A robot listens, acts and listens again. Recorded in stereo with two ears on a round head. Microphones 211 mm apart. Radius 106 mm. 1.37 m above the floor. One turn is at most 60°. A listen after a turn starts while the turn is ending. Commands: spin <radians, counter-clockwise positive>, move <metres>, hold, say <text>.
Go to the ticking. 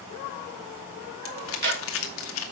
spin -0.79
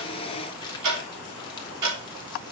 spin -1.05
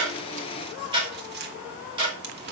spin -0.35
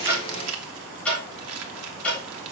move 1.0
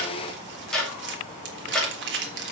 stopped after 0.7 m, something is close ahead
say Something is in my way. I am facing the ticking but have not reached it.